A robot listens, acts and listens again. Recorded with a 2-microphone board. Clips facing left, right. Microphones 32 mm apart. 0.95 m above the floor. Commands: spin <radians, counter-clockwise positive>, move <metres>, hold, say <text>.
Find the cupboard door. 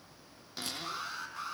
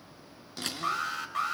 spin 0.52
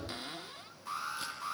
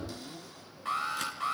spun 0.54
spin 2.44
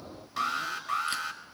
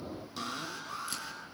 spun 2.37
hold
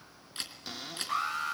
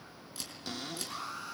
say Found it: a cupboard door, straight ahead.